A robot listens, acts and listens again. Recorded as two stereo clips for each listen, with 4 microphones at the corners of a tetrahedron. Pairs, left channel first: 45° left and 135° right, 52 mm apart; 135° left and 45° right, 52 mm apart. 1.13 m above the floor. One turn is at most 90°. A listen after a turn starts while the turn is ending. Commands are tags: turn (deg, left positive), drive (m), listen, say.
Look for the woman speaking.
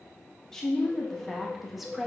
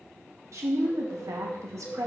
<turn deg="-55"/>
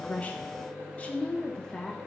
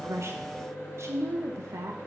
<turn deg="-35"/>
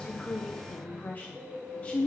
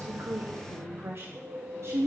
<turn deg="-15"/>
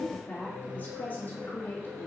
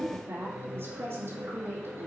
<say>Facing the woman speaking, 1 to 2 m away.</say>